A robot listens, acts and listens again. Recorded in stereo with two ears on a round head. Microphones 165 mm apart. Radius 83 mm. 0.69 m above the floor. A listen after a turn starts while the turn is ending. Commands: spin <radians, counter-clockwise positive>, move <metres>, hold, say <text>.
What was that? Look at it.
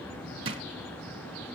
spin -0.52
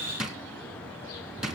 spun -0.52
say Found it: a drawer, straight ahead, 2 to 4 m away.